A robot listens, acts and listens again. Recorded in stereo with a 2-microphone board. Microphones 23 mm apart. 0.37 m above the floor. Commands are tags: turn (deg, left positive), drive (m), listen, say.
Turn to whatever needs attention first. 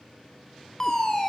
<turn deg="20"/>
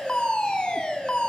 <turn deg="135"/>
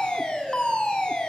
<turn deg="45"/>
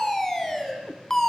<turn deg="20"/>
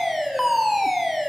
<say>Facing the fire alarm, over 4 m away.</say>